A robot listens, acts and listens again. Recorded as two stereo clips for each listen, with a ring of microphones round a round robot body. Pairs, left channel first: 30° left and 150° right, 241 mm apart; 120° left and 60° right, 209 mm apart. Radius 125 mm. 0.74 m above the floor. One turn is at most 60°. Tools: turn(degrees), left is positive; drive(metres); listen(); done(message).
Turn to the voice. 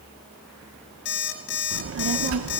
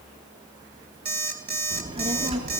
turn(degrees=-60)
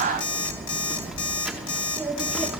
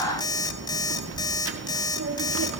turn(degrees=-60)
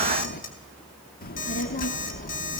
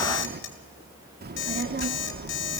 turn(degrees=-20)
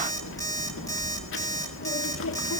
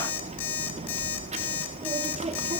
done("Facing the child speaking.")